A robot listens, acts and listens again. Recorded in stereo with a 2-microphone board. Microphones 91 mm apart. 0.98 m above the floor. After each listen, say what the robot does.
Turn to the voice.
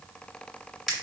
Keep listening.
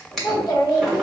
Turn 45° left.
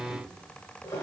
Keep listening.
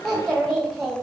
Found it: a child speaking, straight ahead, 1 to 2 m away.